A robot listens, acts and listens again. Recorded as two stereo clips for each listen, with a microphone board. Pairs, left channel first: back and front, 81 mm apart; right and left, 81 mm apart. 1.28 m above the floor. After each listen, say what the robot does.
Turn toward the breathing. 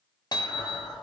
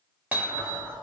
Turn 80° left.
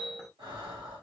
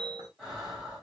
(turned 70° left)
Turn 10° left.
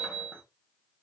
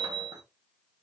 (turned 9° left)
Keep listening.
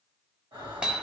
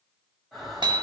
Facing the breathing, 1 to 2 m away.